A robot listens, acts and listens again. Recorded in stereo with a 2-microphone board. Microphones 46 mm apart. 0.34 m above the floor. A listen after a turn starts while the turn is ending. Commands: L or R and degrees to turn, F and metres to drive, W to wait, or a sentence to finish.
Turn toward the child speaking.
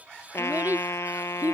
R40
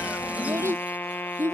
R105
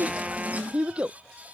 R25
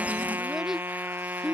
R10
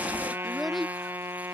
Facing the child speaking.